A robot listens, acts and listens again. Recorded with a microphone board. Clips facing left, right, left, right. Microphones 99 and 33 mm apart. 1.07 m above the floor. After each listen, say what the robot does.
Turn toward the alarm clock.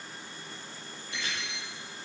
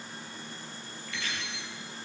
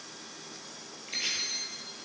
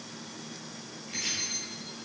Turn 90° left.
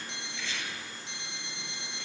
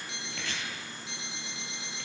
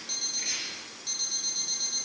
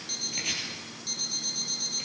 Found it: an alarm clock, straight ahead.